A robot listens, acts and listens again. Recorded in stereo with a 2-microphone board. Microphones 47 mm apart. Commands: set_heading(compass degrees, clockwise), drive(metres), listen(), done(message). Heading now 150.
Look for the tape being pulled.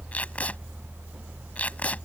set_heading(120)
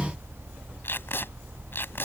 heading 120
set_heading(5)
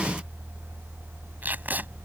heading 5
set_heading(50)
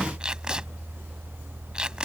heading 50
set_heading(70)
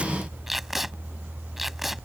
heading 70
done("Facing the tape being pulled.")